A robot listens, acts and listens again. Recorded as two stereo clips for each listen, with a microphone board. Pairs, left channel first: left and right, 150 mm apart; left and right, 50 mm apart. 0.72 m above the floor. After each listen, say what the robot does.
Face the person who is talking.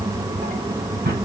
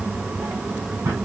Keep listening.
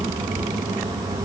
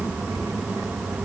Keep listening.
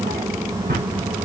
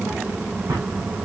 I can't make out anyone speaking to turn to.